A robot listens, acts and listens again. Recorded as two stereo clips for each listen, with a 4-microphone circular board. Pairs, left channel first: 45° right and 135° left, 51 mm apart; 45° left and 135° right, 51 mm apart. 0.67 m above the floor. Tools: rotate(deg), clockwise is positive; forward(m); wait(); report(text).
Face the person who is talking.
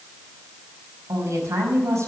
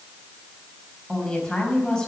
rotate(-125)
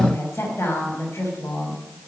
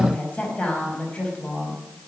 rotate(15)
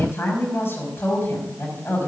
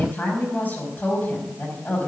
report("Facing the woman speaking.")